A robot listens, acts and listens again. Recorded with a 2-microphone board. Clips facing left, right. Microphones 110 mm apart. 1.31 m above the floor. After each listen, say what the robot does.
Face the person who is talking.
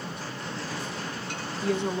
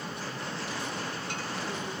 Turn 90° left.
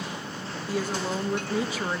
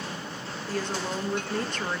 Facing the woman speaking, 1 to 2 m away.